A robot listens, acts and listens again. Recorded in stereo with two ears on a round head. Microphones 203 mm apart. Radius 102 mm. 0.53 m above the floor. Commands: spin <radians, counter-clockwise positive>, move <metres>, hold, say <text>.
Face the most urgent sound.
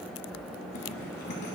hold
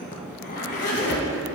hold
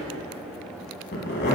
say I can't make out anything urgent to turn to.